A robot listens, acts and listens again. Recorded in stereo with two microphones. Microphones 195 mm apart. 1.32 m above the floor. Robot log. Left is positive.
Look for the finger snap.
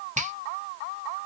note: The finger snap: about 40° right or 140° right.
cmd yaw -40
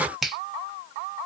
end: Facing the finger snap, under 1 m away.